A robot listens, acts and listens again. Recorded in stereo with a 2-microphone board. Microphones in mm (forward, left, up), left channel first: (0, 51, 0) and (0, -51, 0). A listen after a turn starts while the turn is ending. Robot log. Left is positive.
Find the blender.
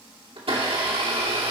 note: The blender: about 65° right or 115° right.
cmd yaw -65
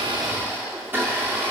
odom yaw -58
note: So it is at 25° right.
cmd yaw -25
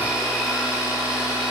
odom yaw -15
note: The blender is now 10° right.
cmd yaw -10
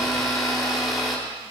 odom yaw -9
end: Found it: a blender, straight ahead.